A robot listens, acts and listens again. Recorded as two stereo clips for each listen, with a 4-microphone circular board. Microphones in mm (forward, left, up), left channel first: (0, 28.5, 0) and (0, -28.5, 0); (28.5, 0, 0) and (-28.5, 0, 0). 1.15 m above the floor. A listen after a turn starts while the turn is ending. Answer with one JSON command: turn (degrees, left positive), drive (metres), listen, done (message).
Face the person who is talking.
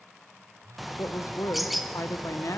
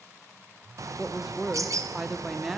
{"turn": 100}
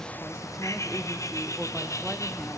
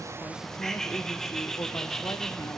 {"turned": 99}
{"listen": true}
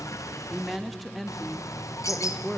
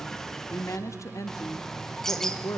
{"done": "Found it: a woman speaking, straight ahead."}